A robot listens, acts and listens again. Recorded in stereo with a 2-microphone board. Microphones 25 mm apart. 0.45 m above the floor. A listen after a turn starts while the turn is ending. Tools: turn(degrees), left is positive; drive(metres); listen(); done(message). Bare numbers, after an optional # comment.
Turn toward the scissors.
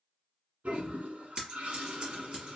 # The scissors: about 40° right or 140° right.
turn(-40)
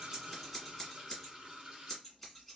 done("Found it: scissors, straight ahead, 1 to 2 m away.")